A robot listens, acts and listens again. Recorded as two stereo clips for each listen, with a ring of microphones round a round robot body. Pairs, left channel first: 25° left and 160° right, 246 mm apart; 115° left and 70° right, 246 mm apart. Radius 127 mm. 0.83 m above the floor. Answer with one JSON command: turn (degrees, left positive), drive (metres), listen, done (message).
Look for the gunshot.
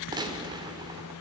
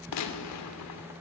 {"turn": 130}
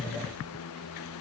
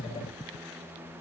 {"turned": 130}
{"done": "Facing where the gunshot came from. I can't hear it now."}